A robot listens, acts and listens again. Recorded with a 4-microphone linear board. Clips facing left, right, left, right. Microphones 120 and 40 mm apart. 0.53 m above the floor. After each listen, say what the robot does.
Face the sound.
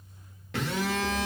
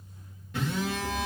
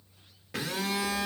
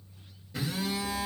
Turn 70° left.
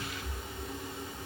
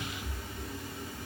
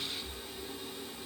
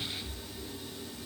Turn 20° left.
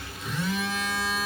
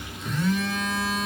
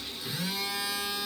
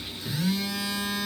Facing the phone buzzing, under 1 m away.